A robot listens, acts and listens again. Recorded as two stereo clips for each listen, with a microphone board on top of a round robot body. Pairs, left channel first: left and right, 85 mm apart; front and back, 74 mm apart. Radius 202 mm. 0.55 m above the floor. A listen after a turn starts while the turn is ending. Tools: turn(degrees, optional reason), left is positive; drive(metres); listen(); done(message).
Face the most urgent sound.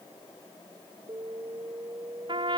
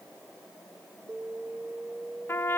turn(degrees=-130, reason="The alarm: 130° right.")
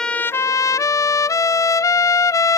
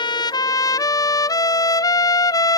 listen()
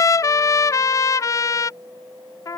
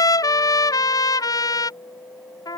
turn(degrees=-35, reason="The alarm is now 35° right.")
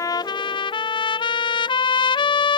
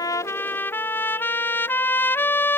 listen()
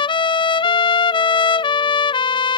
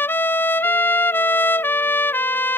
listen()
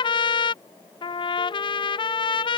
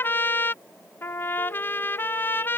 done("I heard an alarm from this way, but can't make it out now.")